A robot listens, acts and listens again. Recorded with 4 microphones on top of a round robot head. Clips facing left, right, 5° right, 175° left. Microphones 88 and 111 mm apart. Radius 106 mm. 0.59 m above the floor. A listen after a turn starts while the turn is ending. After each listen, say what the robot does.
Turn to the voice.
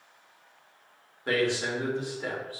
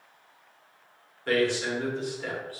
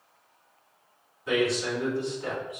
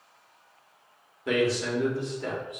Turn 160° left.
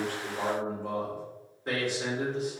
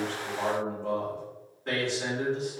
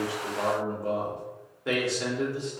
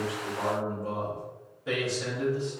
Turn 10° left.
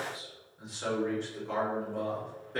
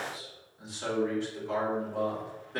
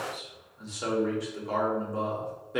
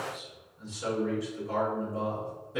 Found it: a man speaking, straight ahead.